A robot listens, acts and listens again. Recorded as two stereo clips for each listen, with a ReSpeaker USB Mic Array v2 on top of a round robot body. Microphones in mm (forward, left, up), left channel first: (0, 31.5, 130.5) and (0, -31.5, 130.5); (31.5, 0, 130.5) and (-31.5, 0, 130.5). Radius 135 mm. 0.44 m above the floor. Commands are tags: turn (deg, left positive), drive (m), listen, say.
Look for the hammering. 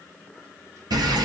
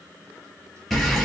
<listen/>
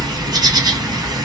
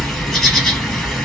<listen/>
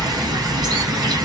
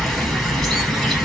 <say>I can't make out hammering, only a bird.</say>